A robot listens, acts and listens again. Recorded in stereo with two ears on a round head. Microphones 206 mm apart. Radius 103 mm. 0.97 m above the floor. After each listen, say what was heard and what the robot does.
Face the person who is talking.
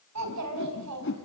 Turn 90° right.
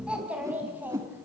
So it is at 10° right. Turn 10° right.
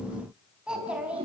Facing the child speaking, over 4 m away.